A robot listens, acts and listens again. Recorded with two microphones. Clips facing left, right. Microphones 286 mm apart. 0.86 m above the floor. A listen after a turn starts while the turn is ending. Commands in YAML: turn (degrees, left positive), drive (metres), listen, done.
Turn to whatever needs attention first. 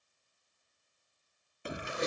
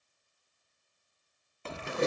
turn: 30
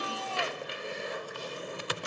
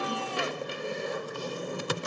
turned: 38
listen: true
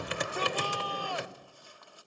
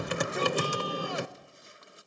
listen: true
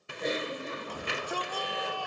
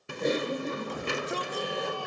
turn: -20
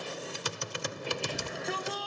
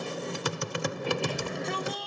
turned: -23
done: "Found it: a shout, straight ahead."